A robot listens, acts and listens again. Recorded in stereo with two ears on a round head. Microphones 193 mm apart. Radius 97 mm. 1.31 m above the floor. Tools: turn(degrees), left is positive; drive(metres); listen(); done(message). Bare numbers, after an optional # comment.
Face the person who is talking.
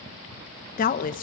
# The woman speaking: about 40° left or 140° left.
turn(40)
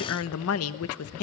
# So it is at 100° left.
turn(100)
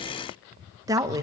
# The woman speaking is now 15° right.
turn(-15)
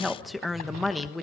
done("Found it: a woman speaking, straight ahead.")